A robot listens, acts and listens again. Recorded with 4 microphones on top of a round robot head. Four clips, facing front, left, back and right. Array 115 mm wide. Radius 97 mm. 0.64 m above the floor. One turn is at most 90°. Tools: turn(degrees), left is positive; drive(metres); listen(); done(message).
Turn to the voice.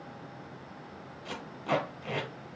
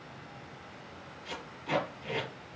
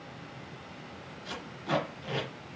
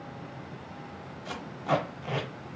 listen()
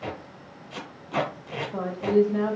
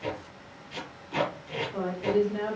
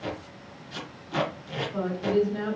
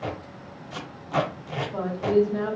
turn(degrees=-25)
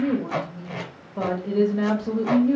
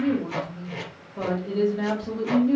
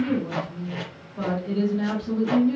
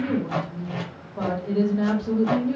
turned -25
done("Found it: a woman speaking, straight ahead, 1 to 2 m away.")